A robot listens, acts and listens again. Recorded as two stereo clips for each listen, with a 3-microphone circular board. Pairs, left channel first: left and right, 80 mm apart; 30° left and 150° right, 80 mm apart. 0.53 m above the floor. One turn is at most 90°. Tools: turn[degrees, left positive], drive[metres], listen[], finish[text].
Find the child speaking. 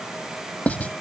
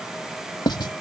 Action: listen[]
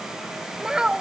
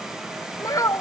Thought: The child speaking: 10° right.
Action: turn[-10]
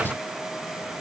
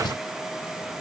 Action: listen[]
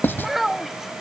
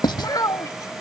Action: finish[Found it: a child speaking, straight ahead.]